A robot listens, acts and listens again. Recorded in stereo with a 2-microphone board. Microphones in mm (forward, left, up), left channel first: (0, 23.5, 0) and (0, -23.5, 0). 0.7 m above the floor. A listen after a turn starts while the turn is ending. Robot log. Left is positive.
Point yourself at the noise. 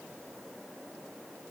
cmd idle
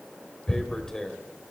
note: The tearing paper: about 15° left or 165° left.
cmd yaw +15
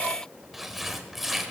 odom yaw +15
end: Found it: tearing paper, straight ahead, 1 to 2 m away.